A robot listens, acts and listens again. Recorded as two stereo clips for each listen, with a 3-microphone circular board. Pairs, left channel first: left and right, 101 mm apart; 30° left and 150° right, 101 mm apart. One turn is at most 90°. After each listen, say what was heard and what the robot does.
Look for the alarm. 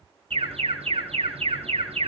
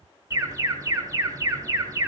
The alarm: 90° right. Turn 90° right.
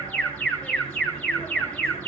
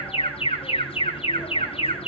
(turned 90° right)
The alarm is now 15° left. Turn 15° left.
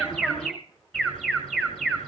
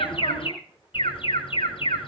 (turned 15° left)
Found it: an alarm, straight ahead, over 4 m away.